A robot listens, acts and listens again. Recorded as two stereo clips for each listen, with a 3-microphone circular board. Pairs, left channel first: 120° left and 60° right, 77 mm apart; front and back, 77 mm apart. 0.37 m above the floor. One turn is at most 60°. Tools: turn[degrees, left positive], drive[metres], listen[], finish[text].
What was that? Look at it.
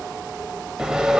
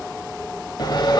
Thought: The sawing: 20° left.
Action: turn[20]
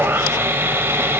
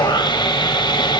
Action: finish[Facing the sawing, under 1 m away.]